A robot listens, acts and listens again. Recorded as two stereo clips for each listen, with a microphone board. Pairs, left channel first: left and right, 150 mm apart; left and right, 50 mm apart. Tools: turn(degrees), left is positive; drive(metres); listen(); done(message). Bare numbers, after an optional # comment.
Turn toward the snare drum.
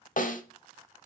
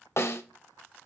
# The snare drum: about 60° left or 120° left.
turn(60)
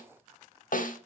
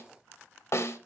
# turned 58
# So it is at 60° left.
turn(60)
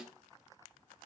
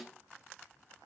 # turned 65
listen()
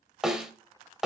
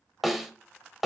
done("Facing the snare drum, under 1 m away.")